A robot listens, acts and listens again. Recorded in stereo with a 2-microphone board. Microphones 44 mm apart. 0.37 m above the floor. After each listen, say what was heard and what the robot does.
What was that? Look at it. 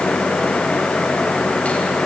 Keep listening.
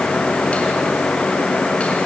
Keep listening.
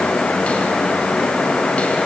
I can't make out anything to turn to.